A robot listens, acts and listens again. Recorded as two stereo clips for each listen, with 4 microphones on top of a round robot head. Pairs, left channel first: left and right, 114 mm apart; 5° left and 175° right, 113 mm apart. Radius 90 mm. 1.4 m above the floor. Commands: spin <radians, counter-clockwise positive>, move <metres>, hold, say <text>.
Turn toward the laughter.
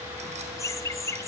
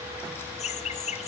spin 0.44
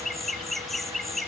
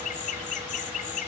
say Facing the laughter, 2 to 4 m away.